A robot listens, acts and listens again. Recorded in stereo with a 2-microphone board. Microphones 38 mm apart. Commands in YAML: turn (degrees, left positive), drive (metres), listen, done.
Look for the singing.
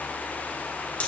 listen: true
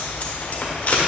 listen: true
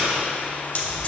done: "I can't make out singing to turn to."